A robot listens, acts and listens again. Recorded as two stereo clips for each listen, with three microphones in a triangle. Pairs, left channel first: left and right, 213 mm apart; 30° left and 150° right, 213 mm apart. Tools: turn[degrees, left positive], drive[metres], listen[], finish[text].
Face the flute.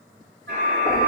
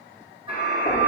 Thought: The flute: 85° right.
Action: turn[-85]
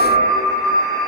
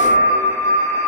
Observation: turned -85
Thought: The flute is now 20° right.
Action: turn[-20]
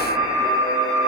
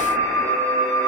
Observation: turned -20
Action: finish[Found it: a flute, straight ahead.]